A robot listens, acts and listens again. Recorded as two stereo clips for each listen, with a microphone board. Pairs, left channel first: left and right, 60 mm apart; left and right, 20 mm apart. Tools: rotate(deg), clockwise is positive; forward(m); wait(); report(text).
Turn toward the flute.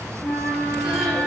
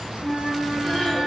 rotate(-25)
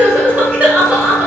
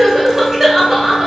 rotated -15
wait()
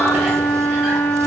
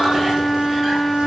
rotate(-140)
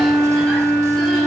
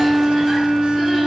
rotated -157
rotate(20)
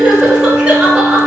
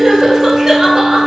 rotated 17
report("Facing the flute.")